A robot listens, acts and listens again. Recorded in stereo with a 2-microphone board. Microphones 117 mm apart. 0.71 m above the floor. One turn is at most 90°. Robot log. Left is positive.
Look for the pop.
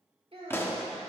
note: The pop: about 20° left or 160° left.
cmd yaw +20
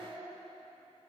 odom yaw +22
cmd idle
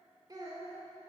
end: I heard a pop, but can't make it out now. It was about straight ahead or 140° left.